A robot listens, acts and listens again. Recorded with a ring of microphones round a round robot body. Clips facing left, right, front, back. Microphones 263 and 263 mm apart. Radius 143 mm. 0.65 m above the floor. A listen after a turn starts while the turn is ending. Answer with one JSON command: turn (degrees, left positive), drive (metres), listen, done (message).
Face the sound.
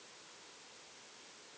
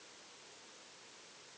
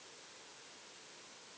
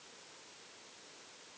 {"listen": true}
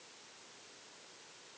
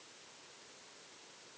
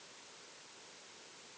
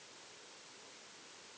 {"listen": true}
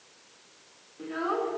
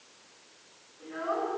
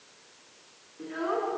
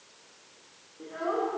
{"turn": 60}
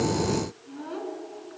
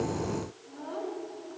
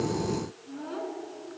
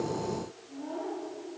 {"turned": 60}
{"turn": 35}
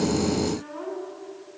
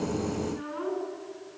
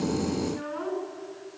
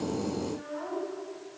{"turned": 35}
{"turn": -20}
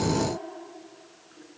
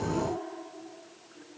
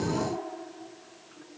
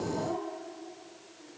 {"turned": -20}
{"done": "Facing the child speaking, over 4 m away."}